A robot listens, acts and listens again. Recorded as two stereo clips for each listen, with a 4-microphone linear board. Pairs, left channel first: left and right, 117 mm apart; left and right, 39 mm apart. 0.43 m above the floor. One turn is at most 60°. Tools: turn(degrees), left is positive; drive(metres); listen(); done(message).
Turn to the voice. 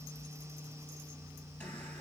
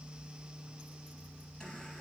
listen()
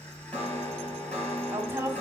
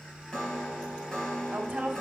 turn(degrees=-20)
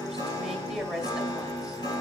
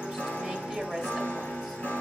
done("Facing the woman speaking.")